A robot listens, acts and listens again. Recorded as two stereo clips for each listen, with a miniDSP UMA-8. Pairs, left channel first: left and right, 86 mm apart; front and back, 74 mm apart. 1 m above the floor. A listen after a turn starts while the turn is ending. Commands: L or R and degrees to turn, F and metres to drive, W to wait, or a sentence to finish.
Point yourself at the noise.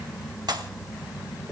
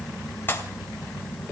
R60
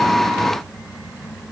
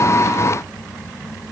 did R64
I heard a pop from this way, but can't make it out now.